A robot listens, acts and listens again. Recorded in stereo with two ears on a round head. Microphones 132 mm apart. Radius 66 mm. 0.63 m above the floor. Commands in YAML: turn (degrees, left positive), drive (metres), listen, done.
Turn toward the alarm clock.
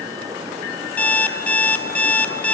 turn: 30
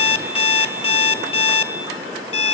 turn: 140
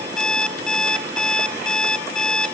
done: "Found it: an alarm clock, straight ahead."